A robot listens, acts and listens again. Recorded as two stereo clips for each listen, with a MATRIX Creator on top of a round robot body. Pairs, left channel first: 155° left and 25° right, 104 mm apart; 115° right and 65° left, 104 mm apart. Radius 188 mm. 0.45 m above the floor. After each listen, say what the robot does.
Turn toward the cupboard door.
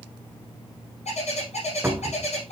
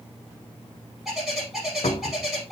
Turn 95° right.
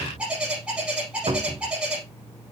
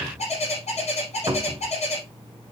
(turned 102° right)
Turn 10° left.
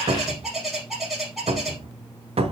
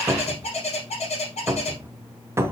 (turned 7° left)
Found it: a cupboard door, straight ahead, 1 to 2 m away.